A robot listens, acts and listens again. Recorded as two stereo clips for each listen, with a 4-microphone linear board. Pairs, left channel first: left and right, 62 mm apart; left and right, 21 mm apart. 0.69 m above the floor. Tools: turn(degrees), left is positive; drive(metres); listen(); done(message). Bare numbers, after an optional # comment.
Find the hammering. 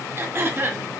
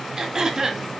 listen()
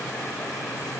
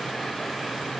listen()
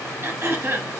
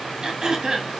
done("I can't make out hammering, only throat clearing.")